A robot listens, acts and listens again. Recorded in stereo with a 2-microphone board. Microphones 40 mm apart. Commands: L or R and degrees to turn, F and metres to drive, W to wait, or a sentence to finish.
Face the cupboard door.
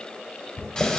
L90
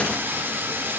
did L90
W
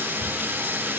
W
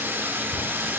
Found it: a cupboard door, straight ahead, 1 to 2 m away.